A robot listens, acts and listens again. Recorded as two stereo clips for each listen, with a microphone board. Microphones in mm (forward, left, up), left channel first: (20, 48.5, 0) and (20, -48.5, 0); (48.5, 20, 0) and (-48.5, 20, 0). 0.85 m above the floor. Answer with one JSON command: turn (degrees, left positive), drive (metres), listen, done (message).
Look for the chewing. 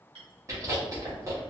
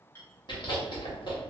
{"turn": -35}
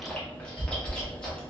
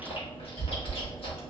{"turn": 10}
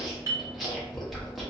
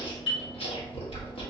{"done": "Found it: chewing, straight ahead."}